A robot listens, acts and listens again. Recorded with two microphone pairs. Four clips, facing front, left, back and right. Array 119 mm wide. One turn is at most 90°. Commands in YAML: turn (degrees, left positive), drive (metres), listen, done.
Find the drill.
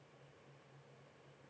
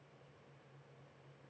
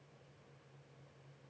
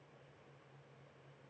listen: true
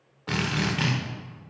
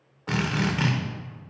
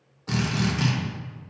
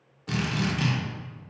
turn: 65
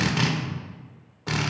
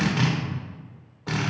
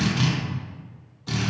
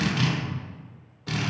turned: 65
turn: 35
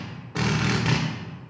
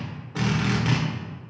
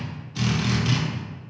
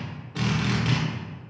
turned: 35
done: "Found it: a drill, straight ahead, 1 to 2 m away."